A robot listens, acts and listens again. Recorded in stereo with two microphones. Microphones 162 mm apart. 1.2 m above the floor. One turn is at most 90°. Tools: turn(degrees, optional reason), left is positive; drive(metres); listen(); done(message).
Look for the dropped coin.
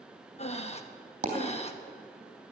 turn(degrees=-45, reason="The dropped coin: about 45° right or 135° right.")
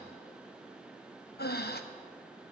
listen()
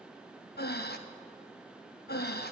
done("I heard a dropped coin, but can't make it out now. It was about straight ahead or 90° right.")